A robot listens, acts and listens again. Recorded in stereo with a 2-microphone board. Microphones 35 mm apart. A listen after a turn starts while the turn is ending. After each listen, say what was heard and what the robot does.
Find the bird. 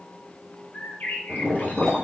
The bird: about 65° left or 115° left. Turn 65° left.
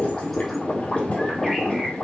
Keep listening.
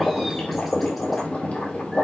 Keep listening.
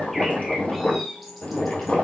Facing the bird.